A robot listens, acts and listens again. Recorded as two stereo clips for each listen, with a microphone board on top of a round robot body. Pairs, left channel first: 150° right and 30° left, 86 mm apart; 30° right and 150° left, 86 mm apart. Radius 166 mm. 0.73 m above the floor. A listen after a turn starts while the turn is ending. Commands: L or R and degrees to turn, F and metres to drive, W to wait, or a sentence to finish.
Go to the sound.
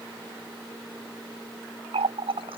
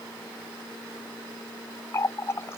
L30
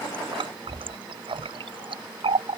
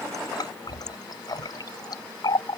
L10
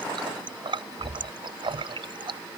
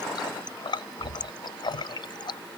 F1.0
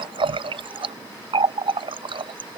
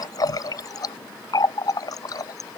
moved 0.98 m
L15
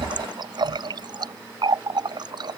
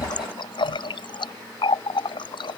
F1.0
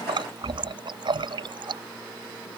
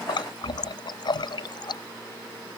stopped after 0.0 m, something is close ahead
Arrived at the running tap, straight ahead.